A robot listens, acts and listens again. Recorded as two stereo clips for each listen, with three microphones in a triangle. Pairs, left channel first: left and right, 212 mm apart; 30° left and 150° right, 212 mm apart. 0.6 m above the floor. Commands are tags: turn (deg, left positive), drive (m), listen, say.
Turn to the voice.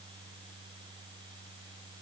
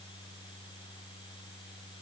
<listen/>
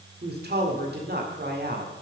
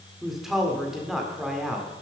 <turn deg="-60"/>
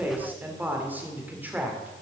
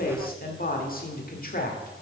<turn deg="-10"/>
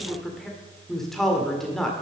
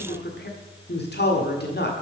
<say>Facing the man speaking, 1 to 2 m away.</say>